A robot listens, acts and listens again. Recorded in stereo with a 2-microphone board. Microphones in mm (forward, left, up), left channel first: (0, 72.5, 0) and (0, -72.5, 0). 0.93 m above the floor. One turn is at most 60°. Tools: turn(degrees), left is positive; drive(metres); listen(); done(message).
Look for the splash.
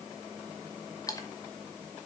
turn(degrees=25)
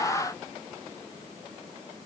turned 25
listen()
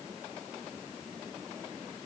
done("I heard a splash, but can't make it out now. It was about straight ahead or 130° left.")